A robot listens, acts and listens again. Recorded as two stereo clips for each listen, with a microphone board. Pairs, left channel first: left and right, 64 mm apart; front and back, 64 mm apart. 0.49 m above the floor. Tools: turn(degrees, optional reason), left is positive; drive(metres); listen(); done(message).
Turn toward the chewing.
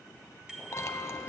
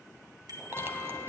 turn(degrees=130, reason="The chewing: 130° left.")
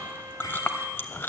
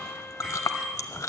turn(degrees=30, reason="The chewing is now 30° left.")
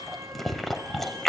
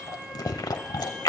done("Facing the chewing, under 1 m away.")